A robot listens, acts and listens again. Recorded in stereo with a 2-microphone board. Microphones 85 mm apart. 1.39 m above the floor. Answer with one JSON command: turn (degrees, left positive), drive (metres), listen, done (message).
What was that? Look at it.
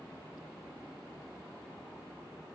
{"listen": true}
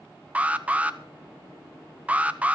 {"turn": -15}
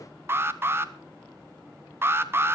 {"turn": -150}
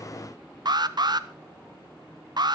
{"turn": -65}
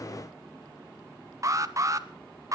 {"turn": -45}
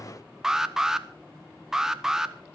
{"done": "Found it: an alarm, straight ahead."}